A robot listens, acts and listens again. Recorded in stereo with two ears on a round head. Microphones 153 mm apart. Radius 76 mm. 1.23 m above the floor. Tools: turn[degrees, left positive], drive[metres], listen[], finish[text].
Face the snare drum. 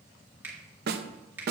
Thought: The snare drum: about 60° right or 120° right.
Action: turn[-60]
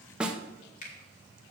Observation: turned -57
Action: finish[Facing the snare drum, under 1 m away.]